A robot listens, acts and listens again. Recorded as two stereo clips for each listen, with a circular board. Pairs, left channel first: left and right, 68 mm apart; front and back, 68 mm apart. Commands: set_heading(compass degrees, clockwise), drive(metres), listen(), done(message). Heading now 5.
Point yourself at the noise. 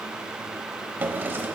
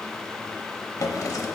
set_heading(35)
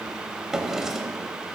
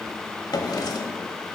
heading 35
set_heading(45)
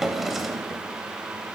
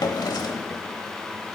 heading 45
done("Facing the drawer.")